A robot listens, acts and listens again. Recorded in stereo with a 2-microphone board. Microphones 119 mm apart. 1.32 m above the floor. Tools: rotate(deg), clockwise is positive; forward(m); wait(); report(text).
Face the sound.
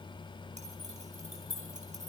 rotate(90)
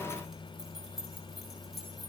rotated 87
report("Facing the keys jangling, over 4 m away.")